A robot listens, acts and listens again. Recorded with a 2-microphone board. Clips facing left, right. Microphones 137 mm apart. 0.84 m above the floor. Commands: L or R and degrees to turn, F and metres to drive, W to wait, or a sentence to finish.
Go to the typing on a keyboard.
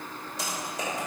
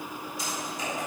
L90
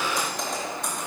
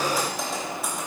F1.0
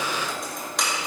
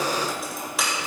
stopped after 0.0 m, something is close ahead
Blocked. The typing on a keyboard is further on, straight ahead.